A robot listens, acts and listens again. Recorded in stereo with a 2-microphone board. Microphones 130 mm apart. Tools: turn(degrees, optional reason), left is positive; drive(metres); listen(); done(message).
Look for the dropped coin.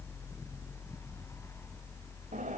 listen()
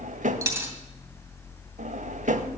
turn(degrees=-25, reason="The dropped coin: about 25° right or 155° right.")
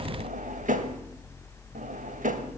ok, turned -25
listen()
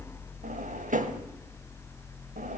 done("I heard a dropped coin, but can't make it out now. It was about straight ahead or 130° right.")